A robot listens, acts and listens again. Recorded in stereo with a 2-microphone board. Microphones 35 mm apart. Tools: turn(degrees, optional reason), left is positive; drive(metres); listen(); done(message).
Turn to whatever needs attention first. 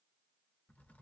listen()
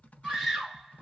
turn(degrees=-30)
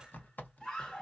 turn(degrees=20, reason="So it is at 20° left.")
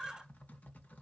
done("Facing the scream.")